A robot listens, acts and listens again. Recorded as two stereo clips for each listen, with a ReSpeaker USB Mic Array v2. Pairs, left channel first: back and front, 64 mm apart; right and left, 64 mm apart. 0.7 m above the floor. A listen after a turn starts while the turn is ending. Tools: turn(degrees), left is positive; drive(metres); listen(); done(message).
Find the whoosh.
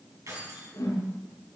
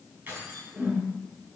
turn(degrees=160)
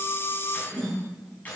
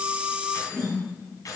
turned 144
turn(degrees=15)
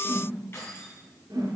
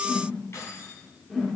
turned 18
done("Facing the whoosh.")